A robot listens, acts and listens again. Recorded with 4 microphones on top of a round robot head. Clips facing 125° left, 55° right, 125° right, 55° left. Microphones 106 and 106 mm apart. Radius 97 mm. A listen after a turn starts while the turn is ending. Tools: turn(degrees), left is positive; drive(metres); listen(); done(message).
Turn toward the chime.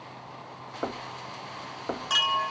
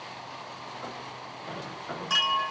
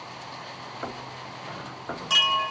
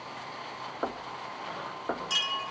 turn(degrees=-155)
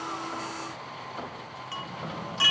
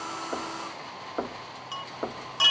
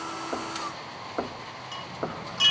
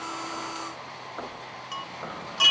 turn(degrees=10)
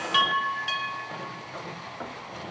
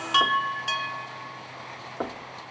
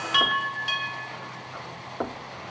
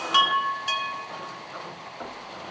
done("Facing the chime.")